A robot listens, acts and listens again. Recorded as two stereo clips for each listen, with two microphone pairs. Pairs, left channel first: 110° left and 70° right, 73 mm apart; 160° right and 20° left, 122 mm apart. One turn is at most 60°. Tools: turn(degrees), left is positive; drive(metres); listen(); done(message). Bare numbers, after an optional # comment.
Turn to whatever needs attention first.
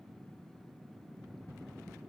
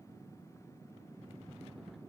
listen()
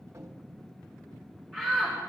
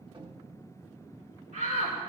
# The shout: 20° left.
turn(20)
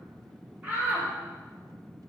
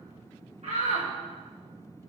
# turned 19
done("Facing the shout, over 4 m away.")